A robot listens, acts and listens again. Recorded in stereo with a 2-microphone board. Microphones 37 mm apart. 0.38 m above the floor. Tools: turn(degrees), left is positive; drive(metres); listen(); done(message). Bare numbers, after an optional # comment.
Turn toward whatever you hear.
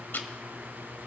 # The ticking: about 60° left or 120° left.
turn(60)
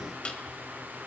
# So it is at 35° left.
turn(35)
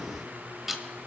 # The ticking is now 10° right.
turn(-10)
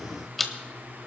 done("Found it: ticking, straight ahead.")